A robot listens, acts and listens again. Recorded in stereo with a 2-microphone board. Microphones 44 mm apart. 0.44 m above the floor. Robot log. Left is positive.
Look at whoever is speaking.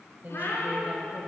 note: The woman speaking: about 40° right or 140° right.
cmd yaw -40
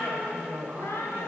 note: So it is at 90° right.
cmd yaw -90
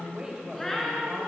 note: The woman speaking is now 20° right.
cmd yaw -20
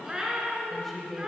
end: Facing the woman speaking, 2 to 4 m away.